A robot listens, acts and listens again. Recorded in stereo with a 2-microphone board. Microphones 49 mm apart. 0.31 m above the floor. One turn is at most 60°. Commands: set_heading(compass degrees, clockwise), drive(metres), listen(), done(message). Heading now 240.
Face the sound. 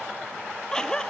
set_heading(210)
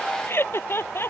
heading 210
set_heading(150)
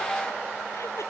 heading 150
set_heading(90)
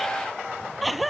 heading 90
done("Found it: laughter, straight ahead.")